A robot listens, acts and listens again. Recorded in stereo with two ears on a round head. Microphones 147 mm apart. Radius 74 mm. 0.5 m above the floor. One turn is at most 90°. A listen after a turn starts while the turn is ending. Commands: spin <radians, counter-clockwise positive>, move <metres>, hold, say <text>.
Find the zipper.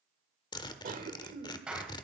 spin 0.52
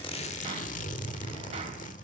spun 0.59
spin 1.57
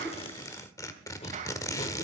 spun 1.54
spin 0.44
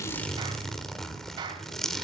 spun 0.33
say Facing the zipper.